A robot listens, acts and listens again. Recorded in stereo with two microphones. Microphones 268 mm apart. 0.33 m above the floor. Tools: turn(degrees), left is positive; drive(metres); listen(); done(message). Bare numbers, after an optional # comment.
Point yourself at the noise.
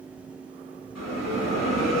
# The bell: about 70° left or 110° left.
turn(70)
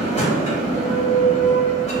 # So it is at 25° left.
turn(25)
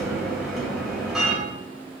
done("Facing the bell, 1 to 2 m away.")